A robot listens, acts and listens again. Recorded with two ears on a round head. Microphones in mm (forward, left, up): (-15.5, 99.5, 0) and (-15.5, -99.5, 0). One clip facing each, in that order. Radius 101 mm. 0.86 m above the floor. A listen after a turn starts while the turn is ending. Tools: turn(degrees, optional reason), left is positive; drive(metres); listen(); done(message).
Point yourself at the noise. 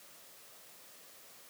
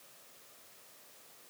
listen()
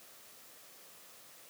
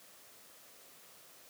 listen()
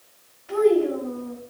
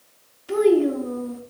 turn(degrees=-45, reason="The child speaking: about 45° right or 135° right.")
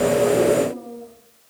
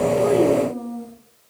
turn(degrees=-90, reason="So it is at 90° right.")
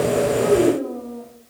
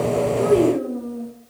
turn(degrees=-10, reason="The child speaking is now 10° right.")
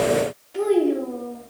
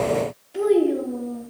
done("Found it: a child speaking, straight ahead, 1 to 2 m away.")